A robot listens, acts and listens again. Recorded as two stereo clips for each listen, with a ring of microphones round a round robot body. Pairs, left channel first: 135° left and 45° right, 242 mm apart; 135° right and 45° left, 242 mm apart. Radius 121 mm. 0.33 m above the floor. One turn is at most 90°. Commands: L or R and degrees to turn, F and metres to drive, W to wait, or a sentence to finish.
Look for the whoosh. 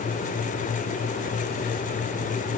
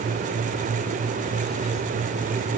W
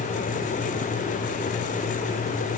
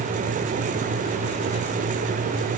W
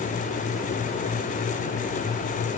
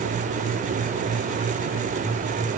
I can't make out a whoosh to turn to.